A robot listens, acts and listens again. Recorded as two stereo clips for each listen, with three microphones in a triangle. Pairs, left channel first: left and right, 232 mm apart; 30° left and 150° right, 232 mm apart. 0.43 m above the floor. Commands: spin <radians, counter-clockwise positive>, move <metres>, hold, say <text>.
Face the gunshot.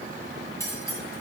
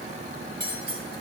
hold
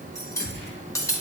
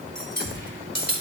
spin -2.44
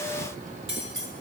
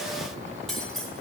say I heard a gunshot from this way, but can't make it out now.